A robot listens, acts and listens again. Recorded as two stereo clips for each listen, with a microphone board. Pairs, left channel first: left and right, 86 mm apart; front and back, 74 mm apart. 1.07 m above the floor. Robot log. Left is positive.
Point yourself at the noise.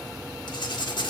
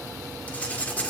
note: The writing: 70° left.
cmd yaw +70
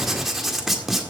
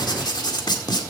end: Facing the writing, 1 to 2 m away.